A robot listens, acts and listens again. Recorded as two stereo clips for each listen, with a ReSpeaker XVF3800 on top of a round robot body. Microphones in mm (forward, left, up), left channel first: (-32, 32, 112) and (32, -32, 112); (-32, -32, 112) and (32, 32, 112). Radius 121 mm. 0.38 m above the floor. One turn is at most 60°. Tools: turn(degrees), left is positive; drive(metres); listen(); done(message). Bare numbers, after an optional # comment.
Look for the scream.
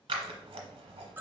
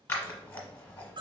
listen()
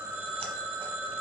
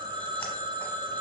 listen()
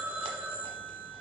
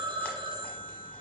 done("I can't make out a scream to turn to.")